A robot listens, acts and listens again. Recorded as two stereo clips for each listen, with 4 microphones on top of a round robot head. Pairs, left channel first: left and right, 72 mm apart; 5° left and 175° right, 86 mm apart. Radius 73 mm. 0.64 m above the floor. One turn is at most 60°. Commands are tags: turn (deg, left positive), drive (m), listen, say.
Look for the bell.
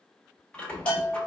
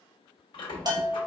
<turn deg="60"/>
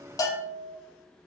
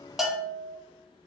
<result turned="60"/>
<turn deg="60"/>
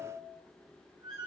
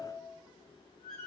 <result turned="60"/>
<turn deg="55"/>
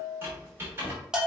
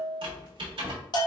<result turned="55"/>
<turn deg="-10"/>
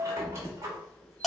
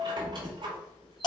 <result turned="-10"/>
<say>Found it: a bell, straight ahead, 1 to 2 m away.</say>